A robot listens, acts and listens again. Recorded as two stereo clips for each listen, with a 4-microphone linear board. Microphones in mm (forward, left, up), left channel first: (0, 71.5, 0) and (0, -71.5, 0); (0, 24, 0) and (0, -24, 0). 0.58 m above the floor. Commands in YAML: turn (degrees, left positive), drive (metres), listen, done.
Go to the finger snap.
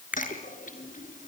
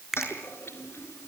turn: -30
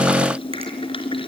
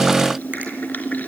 listen: true
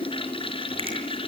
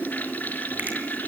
turn: -140
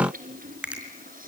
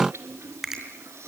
turn: -10
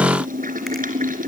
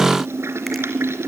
listen: true
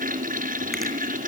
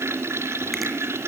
listen: true
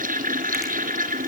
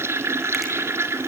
done: "Facing where the finger snap came from. I can't hear it now. I did not reach it."